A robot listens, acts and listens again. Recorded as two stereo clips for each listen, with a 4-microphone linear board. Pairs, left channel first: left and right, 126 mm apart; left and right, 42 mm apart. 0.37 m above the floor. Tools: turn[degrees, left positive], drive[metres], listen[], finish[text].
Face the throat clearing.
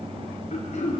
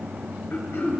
Thought: The throat clearing: about 65° left or 115° left.
Action: turn[65]
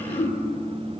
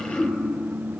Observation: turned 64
Thought: So it is at 50° left.
Action: turn[50]
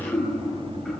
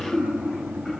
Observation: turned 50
Action: finish[Facing the throat clearing.]